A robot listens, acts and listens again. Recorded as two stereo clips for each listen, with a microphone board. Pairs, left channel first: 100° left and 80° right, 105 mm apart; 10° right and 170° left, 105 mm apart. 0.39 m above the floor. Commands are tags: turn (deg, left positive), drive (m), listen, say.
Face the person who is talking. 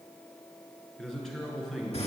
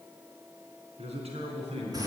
<turn deg="-175"/>
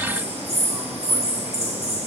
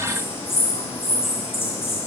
<listen/>
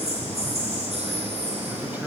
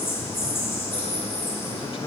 <listen/>
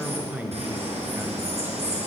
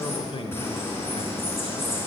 <turn deg="-10"/>
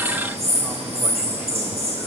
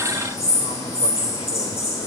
<listen/>
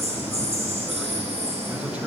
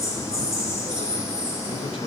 <listen/>
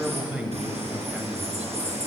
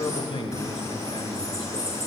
<say>Found it: a man speaking, straight ahead, 1 to 2 m away.</say>